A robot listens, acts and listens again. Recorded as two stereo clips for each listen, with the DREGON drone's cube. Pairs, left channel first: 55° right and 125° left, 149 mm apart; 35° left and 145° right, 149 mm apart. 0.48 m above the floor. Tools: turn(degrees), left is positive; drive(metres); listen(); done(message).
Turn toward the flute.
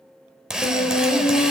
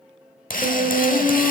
turn(degrees=-95)
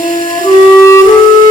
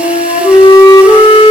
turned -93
done("Facing the flute, 1 to 2 m away.")